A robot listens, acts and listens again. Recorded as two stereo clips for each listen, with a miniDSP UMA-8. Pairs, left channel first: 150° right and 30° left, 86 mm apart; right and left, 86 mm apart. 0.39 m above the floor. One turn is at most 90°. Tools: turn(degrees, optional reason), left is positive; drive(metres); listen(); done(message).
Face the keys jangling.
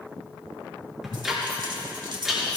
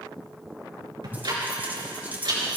turn(degrees=25, reason="The keys jangling: 25° left.")
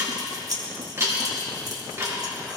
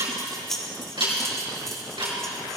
done("Found it: keys jangling, straight ahead, 2 to 4 m away.")